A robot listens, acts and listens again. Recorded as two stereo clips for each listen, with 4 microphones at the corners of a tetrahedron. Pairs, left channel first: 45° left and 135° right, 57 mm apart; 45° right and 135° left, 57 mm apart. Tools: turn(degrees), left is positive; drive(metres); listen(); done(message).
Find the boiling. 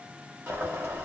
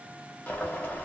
turn(degrees=-105)
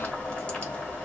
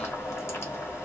turn(degrees=-20)
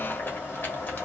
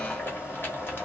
done("Found it: boiling, straight ahead, 1 to 2 m away.")